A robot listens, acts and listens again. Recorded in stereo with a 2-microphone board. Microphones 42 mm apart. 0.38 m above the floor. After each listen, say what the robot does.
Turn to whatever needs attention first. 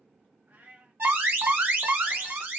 Turn 60° right.
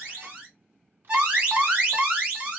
Turn 35° right.
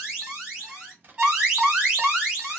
Turn 20° right.
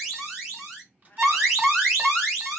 Turn 10° right.
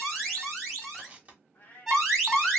Found it: an alarm, straight ahead.